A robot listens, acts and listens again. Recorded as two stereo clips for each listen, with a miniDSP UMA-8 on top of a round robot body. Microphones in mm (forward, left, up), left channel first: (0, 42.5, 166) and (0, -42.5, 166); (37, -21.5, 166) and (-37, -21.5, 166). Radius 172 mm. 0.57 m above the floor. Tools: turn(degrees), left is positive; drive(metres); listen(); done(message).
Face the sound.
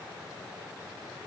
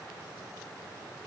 listen()
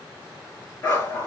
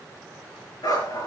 turn(degrees=25)
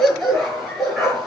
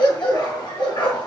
done("Facing the dog barking, over 4 m away.")